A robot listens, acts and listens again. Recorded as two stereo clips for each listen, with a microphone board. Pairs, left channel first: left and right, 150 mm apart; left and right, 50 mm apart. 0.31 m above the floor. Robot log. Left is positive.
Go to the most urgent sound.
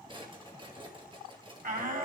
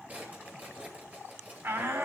note: The shout: about 60° right or 120° right.
cmd yaw -60
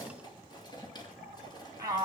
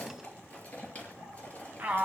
note: So it is at 30° right.
cmd yaw -30
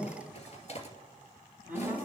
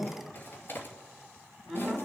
note: The shout is now 10° right.
cmd yaw -10
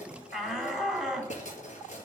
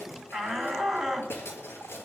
cmd fwd 1.0
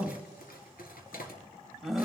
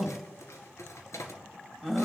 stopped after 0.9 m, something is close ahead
end: Arrived at the shout, straight ahead.